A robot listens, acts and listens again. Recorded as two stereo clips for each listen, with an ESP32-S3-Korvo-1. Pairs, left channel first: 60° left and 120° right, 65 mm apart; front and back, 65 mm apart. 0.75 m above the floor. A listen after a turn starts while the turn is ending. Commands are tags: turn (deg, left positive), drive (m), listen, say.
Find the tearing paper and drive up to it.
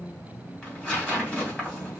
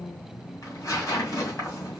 <drive m="1.0"/>
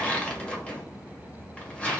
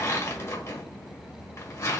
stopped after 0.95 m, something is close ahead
<say>I am next to the tearing paper.</say>